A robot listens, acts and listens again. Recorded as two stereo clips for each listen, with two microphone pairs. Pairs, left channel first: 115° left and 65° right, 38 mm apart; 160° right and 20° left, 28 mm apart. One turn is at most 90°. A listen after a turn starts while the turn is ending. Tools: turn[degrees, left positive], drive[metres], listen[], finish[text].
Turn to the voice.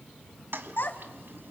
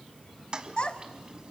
Thought: The child speaking: 145° left.
Action: turn[90]
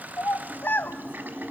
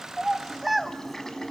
Thought: The child speaking is now 100° left.
Action: turn[90]
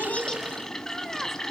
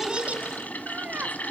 Thought: Nothing new. It was at 10° left.
Action: turn[10]
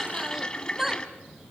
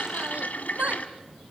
Thought: The child speaking is now 15° left.
Action: turn[15]
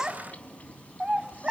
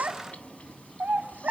Action: finish[Found it: a child speaking, straight ahead.]